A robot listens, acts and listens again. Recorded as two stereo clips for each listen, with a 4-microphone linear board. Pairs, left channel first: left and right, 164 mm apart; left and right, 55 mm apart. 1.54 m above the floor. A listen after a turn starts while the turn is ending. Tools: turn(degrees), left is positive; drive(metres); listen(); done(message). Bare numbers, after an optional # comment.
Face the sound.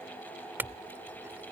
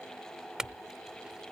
turn(-30)
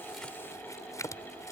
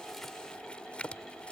# So it is at 20° left.
turn(20)
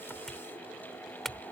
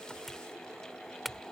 done("Found it: a clink, straight ahead.")